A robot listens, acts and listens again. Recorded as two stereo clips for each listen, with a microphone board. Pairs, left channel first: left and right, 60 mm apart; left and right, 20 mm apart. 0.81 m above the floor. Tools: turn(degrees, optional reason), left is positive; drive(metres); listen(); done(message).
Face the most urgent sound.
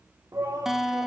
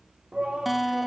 turn(degrees=-70, reason="The shout: about 70° right or 110° right.")
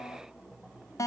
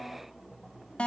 listen()
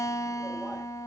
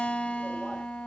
listen()
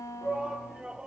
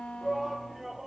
turn(degrees=-10, reason="So it is at 10° right.")
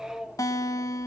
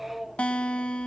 done("Found it: a shout, straight ahead.")